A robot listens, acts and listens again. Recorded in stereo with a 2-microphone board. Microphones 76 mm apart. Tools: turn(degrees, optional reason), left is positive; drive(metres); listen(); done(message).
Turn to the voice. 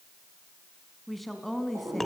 turn(degrees=30)
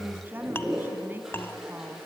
turn(degrees=-25, reason="So it is at 25° right.")
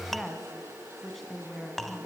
done("Facing the woman speaking, 2 to 4 m away.")